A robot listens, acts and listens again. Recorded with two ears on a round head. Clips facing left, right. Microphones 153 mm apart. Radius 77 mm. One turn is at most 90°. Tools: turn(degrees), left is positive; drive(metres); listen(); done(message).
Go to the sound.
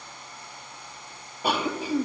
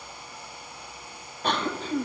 turn(degrees=30)
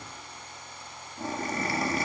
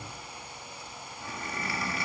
turn(degrees=90)
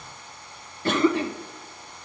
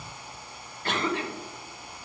turn(degrees=80)
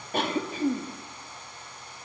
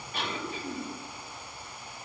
turn(degrees=35)
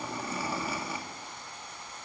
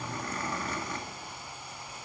turn(degrees=10)
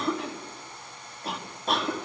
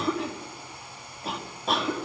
drive(metres=1.0)
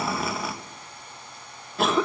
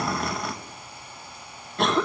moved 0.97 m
drive(metres=1.0)
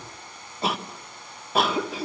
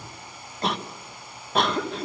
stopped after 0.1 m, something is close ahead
done("I am next to the cough.")